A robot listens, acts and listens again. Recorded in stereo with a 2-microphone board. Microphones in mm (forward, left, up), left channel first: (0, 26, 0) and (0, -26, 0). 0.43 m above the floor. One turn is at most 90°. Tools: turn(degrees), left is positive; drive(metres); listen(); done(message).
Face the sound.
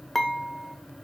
turn(degrees=30)
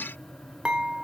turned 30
turn(degrees=-25)
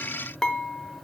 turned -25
turn(degrees=15)
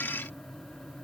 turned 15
listen()
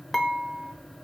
done("Facing the dishes clattering, under 1 m away.")